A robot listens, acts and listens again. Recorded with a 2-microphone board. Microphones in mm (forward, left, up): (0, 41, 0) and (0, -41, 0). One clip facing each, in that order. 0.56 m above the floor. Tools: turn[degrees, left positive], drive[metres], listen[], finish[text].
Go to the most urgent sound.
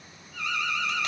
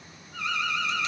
Thought: The alarm: about 35° right or 145° right.
Action: turn[-35]
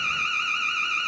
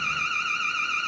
Action: drive[1.0]
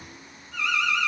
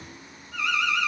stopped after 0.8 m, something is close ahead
Action: finish[Arrived at the alarm, straight ahead.]